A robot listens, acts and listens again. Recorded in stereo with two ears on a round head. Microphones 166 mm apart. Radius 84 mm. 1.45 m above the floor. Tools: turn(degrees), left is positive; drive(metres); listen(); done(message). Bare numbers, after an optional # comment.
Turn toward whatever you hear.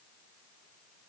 listen()
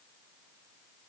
listen()
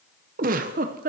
# The giggle: about 45° right or 135° right.
turn(-45)
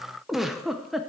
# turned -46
done("Found it: a giggle, straight ahead, under 1 m away.")